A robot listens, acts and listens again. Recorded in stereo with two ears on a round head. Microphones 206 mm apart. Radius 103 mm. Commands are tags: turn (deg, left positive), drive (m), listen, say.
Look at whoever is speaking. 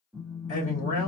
<turn deg="40"/>
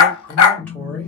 <turn deg="10"/>
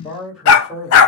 <say>Facing the man speaking, 1 to 2 m away.</say>